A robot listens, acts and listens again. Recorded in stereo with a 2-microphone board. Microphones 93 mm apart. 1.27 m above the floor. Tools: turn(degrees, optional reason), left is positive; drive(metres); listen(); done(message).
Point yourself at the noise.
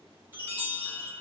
turn(degrees=-20, reason="The chime: about 20° right or 160° right.")
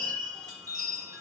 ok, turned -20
turn(degrees=-140, reason="So it is at 140° right.")
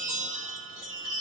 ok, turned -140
turn(degrees=-10, reason="The chime is now 10° right.")
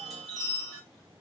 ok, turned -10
done("Facing the chime, 2 to 4 m away.")